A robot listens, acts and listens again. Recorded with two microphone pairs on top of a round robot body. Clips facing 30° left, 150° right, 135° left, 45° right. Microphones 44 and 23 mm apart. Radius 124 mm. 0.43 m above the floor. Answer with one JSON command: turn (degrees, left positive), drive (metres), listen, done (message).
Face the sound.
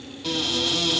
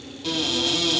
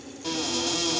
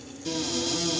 {"turn": 120}
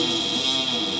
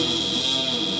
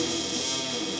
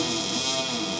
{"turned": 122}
{"done": "Found it: a cupboard door, straight ahead, 2 to 4 m away."}